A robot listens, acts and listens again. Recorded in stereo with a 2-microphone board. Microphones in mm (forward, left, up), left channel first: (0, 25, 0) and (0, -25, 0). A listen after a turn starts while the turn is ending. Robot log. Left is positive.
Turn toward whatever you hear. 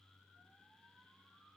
cmd idle
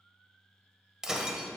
cmd yaw -30
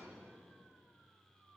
cmd idle
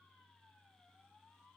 end: I heard breaking glass, but can't make it out now. It was about 20° left or 140° right.